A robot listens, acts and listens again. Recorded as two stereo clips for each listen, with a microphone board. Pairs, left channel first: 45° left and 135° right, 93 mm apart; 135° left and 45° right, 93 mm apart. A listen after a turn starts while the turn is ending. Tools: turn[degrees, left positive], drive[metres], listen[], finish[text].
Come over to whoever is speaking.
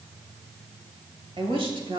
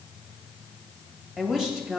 Thought: The woman speaking: 130° right.
Action: turn[-130]
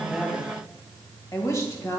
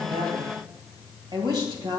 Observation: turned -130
Thought: The woman speaking is now 10° right.
Action: turn[-10]
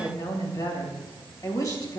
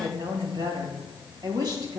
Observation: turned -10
Action: drive[1.0]
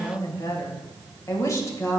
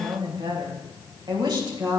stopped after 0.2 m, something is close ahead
Action: finish[Something is in my way. I am facing the woman speaking but have not reached it.]